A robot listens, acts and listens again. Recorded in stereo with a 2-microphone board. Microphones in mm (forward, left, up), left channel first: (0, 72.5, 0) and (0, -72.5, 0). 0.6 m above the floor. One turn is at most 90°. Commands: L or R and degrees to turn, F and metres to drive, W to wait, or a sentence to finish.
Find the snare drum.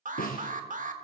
L90
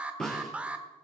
Found it: a snare drum, straight ahead, 2 to 4 m away.